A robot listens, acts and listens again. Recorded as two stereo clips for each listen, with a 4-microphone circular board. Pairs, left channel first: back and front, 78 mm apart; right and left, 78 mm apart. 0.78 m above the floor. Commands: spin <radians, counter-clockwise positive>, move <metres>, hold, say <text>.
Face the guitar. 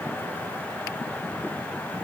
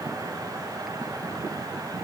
hold
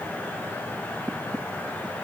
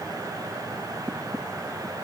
hold
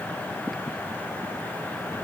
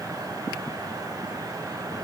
say I can't make out a guitar.